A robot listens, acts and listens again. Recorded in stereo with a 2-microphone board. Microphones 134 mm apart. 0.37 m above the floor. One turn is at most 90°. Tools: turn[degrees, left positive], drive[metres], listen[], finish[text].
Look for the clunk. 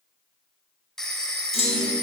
Thought: The clunk: about 55° left or 125° left.
Action: turn[55]
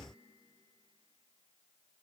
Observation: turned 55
Action: listen[]
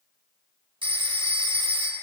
Action: finish[I heard a clunk, but can't make it out now. It was about straight ahead or 70° left.]